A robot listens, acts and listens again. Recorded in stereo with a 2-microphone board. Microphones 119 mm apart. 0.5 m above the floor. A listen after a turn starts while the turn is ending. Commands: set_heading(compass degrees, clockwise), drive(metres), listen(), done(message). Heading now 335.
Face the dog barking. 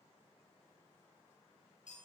listen()
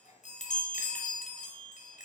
listen()
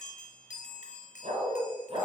set_heading(30)
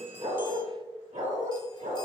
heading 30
set_heading(120)
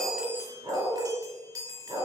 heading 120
set_heading(145)
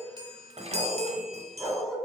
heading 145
done("Facing the dog barking.")